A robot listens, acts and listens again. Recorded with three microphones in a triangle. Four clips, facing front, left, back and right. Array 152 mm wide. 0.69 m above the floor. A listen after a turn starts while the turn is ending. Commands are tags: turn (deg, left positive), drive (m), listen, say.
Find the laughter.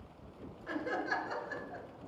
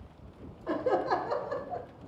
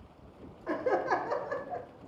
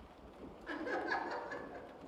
<turn deg="125"/>
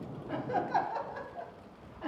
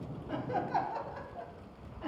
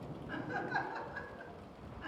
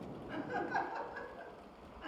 <turn deg="30"/>
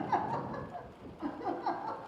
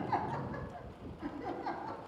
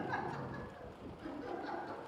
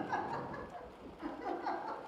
<say>Found it: laughter, straight ahead, over 4 m away.</say>